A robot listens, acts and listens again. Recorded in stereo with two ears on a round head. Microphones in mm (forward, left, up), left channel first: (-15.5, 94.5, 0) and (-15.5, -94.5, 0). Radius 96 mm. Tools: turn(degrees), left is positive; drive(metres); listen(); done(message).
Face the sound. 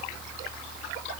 listen()
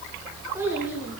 turn(degrees=-30)
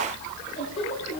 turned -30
listen()
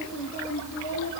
turn(degrees=35)
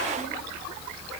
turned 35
listen()
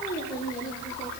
listen()
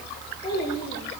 turn(degrees=20)
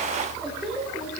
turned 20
done("Facing the child speaking, over 4 m away.")